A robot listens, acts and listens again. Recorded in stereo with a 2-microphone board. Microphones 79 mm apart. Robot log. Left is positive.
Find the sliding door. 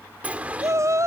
note: The sliding door: about 20° right or 160° right.
cmd yaw -20
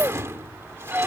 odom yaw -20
note: So it is at 140° right.
cmd yaw -140
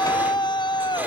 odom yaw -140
cmd idle
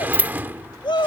note: The sliding door is now 30° right.
cmd yaw -30
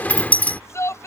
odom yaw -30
note: The sliding door is now 20° left.
cmd yaw +20
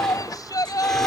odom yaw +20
cmd idle
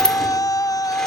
note: The sliding door is now 10° left.
cmd yaw +10
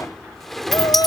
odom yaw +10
end: Found it: a sliding door, straight ahead.